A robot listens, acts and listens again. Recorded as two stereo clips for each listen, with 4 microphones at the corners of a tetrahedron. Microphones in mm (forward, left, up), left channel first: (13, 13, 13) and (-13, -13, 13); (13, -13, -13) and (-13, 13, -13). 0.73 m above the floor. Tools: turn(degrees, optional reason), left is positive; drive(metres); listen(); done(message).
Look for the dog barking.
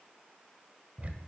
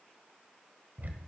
listen()
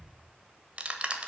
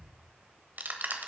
listen()
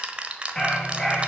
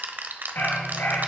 turn(degrees=-30, reason="The dog barking: 30° right.")
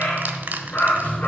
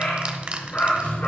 done("Facing the dog barking, 2 to 4 m away.")